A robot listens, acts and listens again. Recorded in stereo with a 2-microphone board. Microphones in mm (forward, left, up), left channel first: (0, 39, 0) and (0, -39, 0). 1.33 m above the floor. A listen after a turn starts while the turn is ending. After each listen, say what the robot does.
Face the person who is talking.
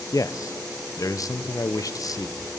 Turn 50° left.
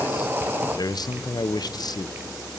Turn 75° left.
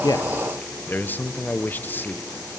Turn 25° left.
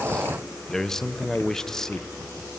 Found it: a man speaking, straight ahead.